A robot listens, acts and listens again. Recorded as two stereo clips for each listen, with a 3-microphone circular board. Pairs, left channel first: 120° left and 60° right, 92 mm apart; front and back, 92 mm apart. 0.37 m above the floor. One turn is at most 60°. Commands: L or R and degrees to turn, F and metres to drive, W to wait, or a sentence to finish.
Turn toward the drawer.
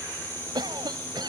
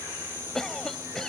W
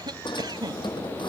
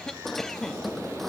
L60
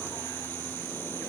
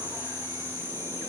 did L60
L25
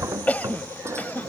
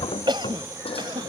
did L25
Facing the drawer.